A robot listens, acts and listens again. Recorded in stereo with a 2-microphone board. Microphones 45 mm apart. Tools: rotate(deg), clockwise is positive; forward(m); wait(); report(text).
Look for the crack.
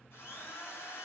wait()
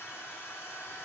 wait()
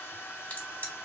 rotate(-45)
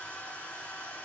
wait()
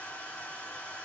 report("I heard a crack, but can't make it out now. It was about straight ahead or 90° left.")